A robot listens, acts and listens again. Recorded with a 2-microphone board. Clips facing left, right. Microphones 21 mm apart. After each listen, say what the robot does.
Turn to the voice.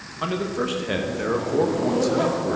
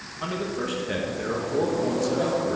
Turn 15° left.
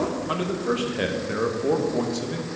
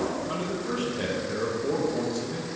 Turn 150° left.
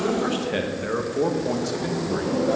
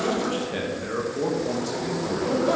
Turn 25° left.
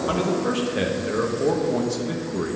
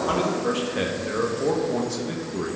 Facing the man speaking.